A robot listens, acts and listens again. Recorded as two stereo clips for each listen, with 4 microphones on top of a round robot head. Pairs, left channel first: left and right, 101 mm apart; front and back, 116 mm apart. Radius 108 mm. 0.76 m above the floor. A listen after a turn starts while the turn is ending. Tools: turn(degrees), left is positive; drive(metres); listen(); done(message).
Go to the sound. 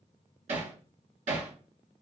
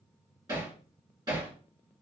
turn(degrees=-115)
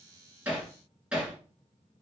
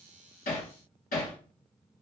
turn(degrees=-10)
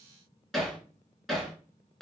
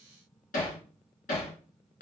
drive(metres=1.0)
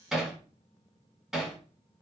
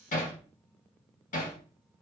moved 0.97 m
drive(metres=1.0)
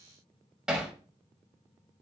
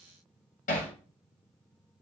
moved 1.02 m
drive(metres=1.0)
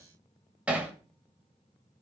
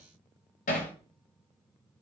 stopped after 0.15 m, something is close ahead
turn(degrees=-10)
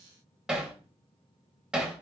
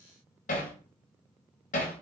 turn(degrees=-10)
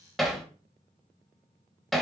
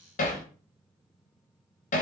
done("I am next to the hammering.")